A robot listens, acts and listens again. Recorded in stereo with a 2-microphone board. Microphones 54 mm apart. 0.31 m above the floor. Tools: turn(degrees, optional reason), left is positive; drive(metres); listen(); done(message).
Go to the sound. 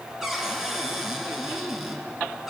turn(degrees=-30)
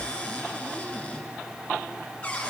turn(degrees=25, reason="So it is at 25° left.")
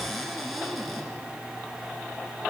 drive(metres=1.0)
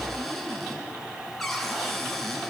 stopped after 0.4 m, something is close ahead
done("Blocked. The cupboard door is further on, straight ahead.")